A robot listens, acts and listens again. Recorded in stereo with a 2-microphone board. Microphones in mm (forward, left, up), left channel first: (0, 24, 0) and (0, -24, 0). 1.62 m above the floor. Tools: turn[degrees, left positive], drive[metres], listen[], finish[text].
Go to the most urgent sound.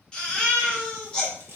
Action: turn[30]
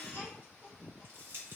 Action: listen[]
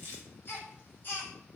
Thought: So it is at 135° left.
Action: turn[135]
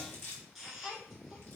Action: drive[1.0]
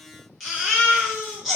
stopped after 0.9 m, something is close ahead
Action: finish[Arrived at the baby crying, straight ahead.]